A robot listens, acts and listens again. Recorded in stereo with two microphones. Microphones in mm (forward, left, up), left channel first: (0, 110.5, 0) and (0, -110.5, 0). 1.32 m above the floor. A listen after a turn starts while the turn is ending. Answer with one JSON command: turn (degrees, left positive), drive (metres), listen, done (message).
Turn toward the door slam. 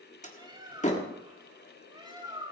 {"turn": 30}
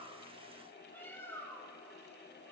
{"listen": true}
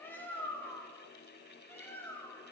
{"done": "I heard a door slam, but can't make it out now. It was about straight ahead or 120° left."}